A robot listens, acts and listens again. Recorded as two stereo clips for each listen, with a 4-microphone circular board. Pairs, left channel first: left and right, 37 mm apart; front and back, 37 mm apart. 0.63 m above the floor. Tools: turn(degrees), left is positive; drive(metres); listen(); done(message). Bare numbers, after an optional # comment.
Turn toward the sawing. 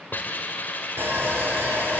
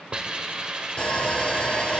# The sawing: 65° right.
turn(-65)
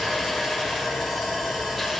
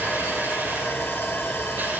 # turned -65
done("Facing the sawing, 2 to 4 m away.")